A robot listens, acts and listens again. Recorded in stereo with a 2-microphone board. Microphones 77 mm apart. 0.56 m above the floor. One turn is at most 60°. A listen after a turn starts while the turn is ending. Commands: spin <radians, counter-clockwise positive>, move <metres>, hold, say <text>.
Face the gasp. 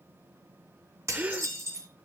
spin -0.35
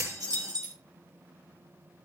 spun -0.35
hold
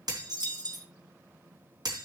say I heard a gasp, but can't make it out now. It was about straight ahead or 140° right.